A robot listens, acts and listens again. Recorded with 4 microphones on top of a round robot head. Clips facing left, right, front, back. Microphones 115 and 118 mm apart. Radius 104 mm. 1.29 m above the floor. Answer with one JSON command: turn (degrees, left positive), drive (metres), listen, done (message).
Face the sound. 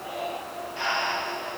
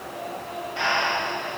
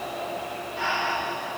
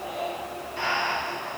{"turn": -120}
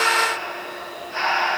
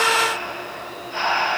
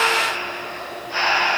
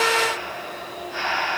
{"done": "Found it: breathing, straight ahead, under 1 m away."}